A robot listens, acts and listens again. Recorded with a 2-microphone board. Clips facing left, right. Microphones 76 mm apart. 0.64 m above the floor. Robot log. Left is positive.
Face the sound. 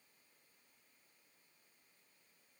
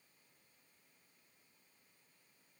cmd idle
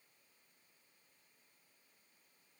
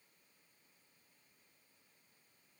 cmd idle
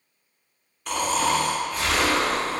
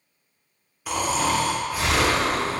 cmd yaw -30
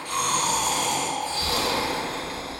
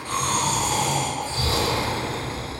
note: So it is at 140° right.
cmd yaw -140
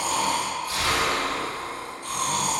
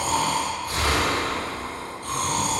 note: The snoring is now 60° right.
cmd yaw -60
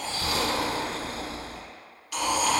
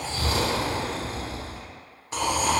note: The snoring is now 35° right.
cmd yaw -35
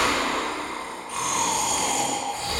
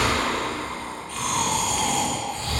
note: The snoring is now 10° left.
cmd yaw +10
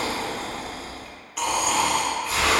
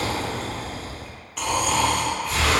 end: Facing the snoring.